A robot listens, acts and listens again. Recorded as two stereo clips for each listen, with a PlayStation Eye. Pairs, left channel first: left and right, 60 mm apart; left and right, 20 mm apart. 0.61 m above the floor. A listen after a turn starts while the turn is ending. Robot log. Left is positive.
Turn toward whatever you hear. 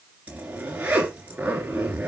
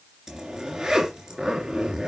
note: The zipper: about 25° right or 155° right.
cmd yaw -25
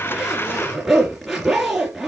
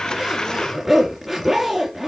end: Found it: a zipper, straight ahead, 2 to 4 m away.